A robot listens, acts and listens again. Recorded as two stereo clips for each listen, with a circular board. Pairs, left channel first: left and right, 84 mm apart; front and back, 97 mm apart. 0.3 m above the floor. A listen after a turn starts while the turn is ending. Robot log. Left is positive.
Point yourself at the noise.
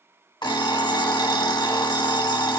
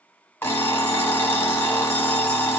note: The alarm clock: 70° left.
cmd yaw +70
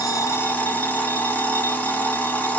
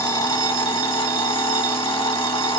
note: The alarm clock is now 25° left.
cmd yaw +25
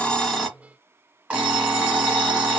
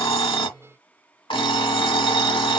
note: The alarm clock is now 15° right.
cmd yaw -15
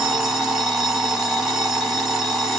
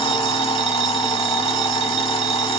end: Found it: an alarm clock, straight ahead.